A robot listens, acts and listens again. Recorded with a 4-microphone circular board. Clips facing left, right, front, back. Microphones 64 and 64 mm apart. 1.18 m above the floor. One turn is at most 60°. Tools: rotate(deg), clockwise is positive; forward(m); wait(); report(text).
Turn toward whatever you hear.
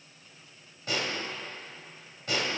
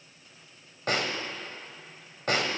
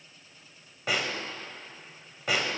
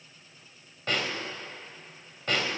rotate(60)
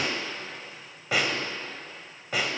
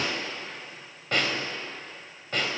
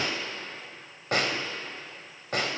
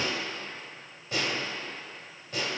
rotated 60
rotate(-10)
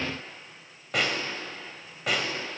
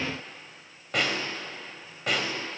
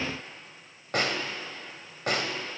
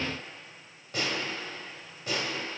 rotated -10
report("Facing the snare drum, 1 to 2 m away.")